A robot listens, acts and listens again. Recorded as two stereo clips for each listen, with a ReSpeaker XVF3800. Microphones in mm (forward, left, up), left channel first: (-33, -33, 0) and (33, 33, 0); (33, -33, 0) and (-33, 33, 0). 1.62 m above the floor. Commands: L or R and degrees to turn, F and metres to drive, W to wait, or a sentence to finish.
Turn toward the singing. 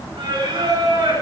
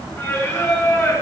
L10
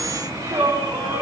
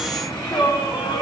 R10
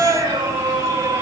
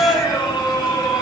R15
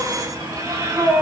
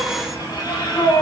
R10
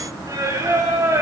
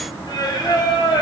R10
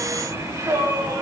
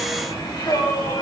Facing the singing.